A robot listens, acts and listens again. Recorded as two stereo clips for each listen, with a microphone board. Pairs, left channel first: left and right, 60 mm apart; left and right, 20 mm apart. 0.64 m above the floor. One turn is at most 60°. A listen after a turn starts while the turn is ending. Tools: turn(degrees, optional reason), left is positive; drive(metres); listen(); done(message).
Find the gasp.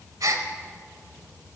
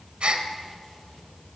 turn(degrees=-60, reason="The gasp: about 70° right or 110° right.")
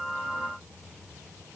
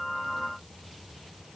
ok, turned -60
listen()
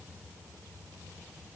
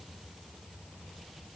done("I heard a gasp, but can't make it out now. It was about 10° right or 50° right.")